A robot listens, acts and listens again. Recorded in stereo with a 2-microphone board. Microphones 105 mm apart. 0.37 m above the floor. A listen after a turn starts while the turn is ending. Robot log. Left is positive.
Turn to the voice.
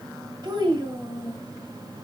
note: The child speaking: about 45° right or 135° right.
cmd yaw -45
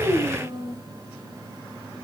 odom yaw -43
note: So it is at 80° right.
cmd yaw -80
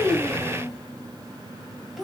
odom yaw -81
end: Facing the child speaking, 1 to 2 m away.